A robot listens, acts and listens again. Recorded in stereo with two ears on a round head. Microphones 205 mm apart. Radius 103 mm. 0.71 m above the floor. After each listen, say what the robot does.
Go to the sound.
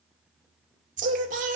Turn 35° right.
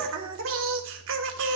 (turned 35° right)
Turn 105° right.
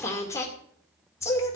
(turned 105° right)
Turn 15° left.
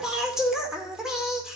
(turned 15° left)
Drive 1.0 m forward.
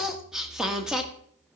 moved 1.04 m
Drive 1.0 m forward.
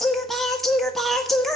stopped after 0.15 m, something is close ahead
Arrived at the singing, straight ahead.